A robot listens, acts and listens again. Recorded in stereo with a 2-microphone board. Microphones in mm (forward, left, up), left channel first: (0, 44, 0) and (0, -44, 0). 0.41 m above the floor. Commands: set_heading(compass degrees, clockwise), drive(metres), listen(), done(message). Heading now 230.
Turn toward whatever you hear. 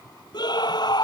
set_heading(175)
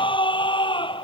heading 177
set_heading(102)
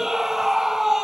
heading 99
done("Facing the scream.")